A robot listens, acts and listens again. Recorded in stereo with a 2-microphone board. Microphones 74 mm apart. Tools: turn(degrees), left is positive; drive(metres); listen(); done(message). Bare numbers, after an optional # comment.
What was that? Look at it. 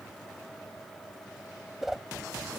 turn(-30)
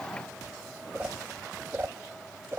# So it is at 140° right.
turn(-140)
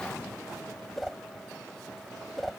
done("Found it: a whoosh, straight ahead.")